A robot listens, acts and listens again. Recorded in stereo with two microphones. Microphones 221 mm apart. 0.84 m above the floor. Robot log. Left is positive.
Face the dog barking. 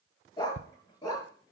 note: The dog barking: about 15° left or 165° left.
cmd yaw +15
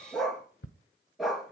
cmd yaw +30
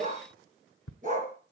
note: So it is at 40° right.
cmd yaw -40
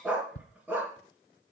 end: Facing the dog barking.